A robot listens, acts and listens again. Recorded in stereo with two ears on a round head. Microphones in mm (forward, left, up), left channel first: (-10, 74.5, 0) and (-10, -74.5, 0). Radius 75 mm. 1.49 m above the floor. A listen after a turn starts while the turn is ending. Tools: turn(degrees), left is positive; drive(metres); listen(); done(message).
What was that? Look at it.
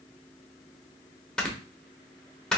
turn(degrees=30)
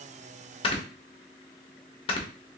turn(degrees=145)
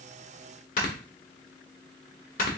turn(degrees=55)
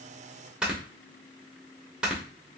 done("Found it: snoring, straight ahead, under 1 m away.")